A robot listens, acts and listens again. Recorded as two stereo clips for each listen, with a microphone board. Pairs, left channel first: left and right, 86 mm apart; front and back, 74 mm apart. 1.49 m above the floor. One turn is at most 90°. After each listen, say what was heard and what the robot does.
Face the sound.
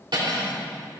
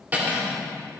The cutlery clinking: 115° right. Turn 90° right.
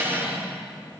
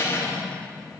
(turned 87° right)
The cutlery clinking is now 30° right. Turn 30° right.
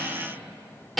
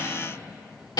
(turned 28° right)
Facing the cutlery clinking, 2 to 4 m away.